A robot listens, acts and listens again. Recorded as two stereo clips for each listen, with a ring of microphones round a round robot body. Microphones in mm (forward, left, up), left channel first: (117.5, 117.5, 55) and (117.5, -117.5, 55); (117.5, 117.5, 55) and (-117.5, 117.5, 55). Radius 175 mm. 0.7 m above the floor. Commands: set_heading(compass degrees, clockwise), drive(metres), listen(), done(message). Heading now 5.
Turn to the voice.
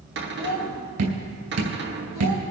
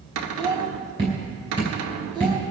set_heading(255)
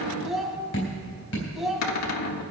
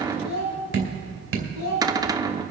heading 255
done("Found it: a child speaking, straight ahead.")